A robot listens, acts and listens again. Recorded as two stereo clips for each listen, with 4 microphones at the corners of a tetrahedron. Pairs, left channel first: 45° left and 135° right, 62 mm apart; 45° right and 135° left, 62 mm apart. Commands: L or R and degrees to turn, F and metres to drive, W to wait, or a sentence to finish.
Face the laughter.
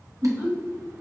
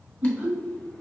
R175
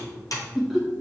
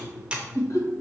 R45
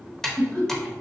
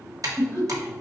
R20
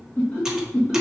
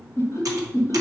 R25
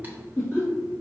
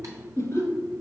Facing the laughter, 1 to 2 m away.